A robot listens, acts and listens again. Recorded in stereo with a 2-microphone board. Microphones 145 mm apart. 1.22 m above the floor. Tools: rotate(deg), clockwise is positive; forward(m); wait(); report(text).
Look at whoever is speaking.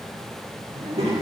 rotate(45)
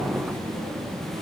rotate(90)
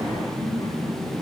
rotate(-30)
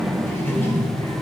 rotate(-20)
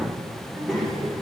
report("Found it: a child speaking, straight ahead.")